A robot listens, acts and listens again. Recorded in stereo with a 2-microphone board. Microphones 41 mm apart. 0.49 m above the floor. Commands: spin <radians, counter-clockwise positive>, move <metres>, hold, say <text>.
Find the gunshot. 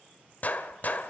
spin 0.70
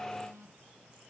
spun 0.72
hold
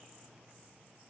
say I heard a gunshot, but can't make it out now. It was about straight ahead or 95° left.